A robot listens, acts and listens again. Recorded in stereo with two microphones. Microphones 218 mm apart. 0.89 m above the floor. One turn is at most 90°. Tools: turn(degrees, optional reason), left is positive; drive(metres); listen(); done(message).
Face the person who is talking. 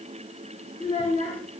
turn(degrees=30, reason="The child speaking: about 30° left or 150° left.")
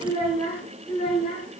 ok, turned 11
turn(degrees=25, reason="The child speaking: about 25° left or 155° left.")
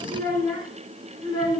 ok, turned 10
turn(degrees=25, reason="The child speaking: about 25° left or 155° left.")
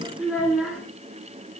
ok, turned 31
done("Found it: a child speaking, straight ahead, over 4 m away.")